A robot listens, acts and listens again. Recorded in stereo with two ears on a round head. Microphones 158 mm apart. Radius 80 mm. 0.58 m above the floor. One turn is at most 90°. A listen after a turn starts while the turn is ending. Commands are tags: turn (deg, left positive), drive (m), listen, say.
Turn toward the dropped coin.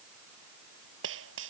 <turn deg="-90"/>
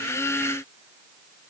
<say>Facing where the dropped coin came from. I can't hear it now.</say>